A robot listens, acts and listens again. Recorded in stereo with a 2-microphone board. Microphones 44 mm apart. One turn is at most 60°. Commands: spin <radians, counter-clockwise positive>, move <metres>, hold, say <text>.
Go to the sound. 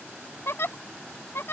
spin 1.05
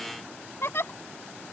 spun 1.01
spin 1.05
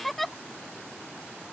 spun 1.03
move 1.0
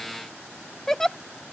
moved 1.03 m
spin 0.17
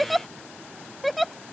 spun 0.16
move 1.0
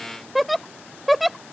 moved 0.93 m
move 1.0
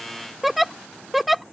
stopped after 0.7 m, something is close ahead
say I am next to the giggle.